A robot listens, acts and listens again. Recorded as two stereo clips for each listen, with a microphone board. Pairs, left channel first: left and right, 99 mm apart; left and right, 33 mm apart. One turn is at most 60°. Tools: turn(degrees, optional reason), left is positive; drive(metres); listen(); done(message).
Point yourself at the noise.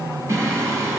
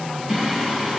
turn(degrees=-30, reason="The singing: about 30° right or 150° right.")
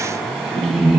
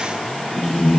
done("Found it: singing, straight ahead, over 4 m away.")